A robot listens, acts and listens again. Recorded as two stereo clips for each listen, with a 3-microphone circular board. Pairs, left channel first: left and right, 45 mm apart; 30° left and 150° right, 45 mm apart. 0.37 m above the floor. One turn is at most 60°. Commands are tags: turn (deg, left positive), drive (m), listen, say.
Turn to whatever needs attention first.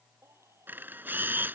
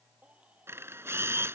<turn deg="-60"/>
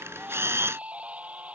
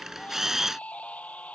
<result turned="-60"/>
<turn deg="-30"/>
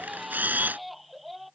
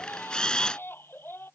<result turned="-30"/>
<say>Facing the baby crying.</say>